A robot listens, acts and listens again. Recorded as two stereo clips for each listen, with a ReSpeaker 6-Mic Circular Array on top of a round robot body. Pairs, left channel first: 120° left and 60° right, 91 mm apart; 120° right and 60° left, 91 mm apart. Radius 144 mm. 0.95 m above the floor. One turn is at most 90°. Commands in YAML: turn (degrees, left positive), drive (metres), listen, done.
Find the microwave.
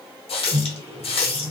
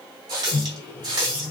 turn: -60
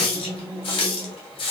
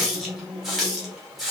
turn: -20
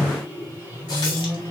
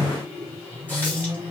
done: "Facing the microwave."